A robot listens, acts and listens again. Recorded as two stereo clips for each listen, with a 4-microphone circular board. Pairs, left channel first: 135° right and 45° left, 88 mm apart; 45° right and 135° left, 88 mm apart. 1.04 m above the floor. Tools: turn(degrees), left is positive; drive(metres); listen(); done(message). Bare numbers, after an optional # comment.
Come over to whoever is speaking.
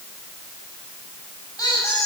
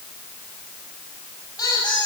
listen()
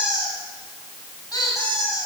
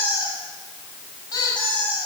listen()
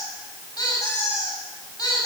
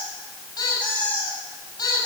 done("I can't make out anyone speaking to turn to.")